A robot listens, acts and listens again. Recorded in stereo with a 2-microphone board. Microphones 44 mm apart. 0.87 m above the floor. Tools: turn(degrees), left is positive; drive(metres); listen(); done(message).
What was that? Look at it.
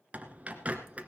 turn(degrees=-30)
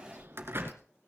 turn(degrees=-115)
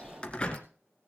turn(degrees=25)
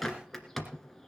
done("Facing the bird.")